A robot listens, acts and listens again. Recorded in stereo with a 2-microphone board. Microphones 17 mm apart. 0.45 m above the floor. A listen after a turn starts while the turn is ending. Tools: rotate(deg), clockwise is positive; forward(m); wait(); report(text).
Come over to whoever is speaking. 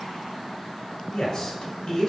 rotate(-45)
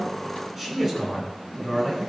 forward(1.0)
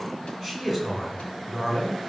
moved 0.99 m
forward(1.0)
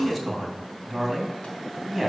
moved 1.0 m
forward(1.0)
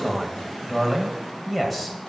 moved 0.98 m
forward(1.0)
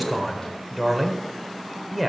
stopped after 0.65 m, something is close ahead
report("Arrived at the man speaking, straight ahead.")